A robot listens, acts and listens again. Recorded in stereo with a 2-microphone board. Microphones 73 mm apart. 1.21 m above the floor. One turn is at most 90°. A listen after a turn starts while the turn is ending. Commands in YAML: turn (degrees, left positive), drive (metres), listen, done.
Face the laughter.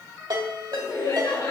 turn: 90
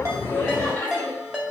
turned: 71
turn: 20
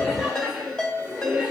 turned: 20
turn: -15
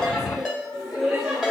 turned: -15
turn: -10
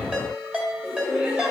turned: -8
turn: -10
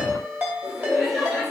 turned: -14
done: "Found it: laughter, straight ahead, 2 to 4 m away."